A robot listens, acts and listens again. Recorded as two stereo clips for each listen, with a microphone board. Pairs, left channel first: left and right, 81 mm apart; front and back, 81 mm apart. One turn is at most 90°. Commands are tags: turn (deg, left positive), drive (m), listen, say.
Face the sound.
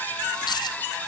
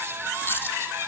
<turn deg="65"/>
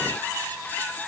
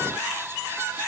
<say>I heard a dropped coin from this way, but can't make it out now.</say>